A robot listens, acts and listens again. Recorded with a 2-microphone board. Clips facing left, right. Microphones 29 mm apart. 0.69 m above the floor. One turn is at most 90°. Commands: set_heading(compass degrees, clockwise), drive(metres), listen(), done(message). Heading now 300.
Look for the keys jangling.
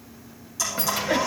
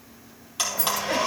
set_heading(240)
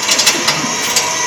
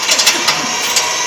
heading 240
done("Facing the keys jangling.")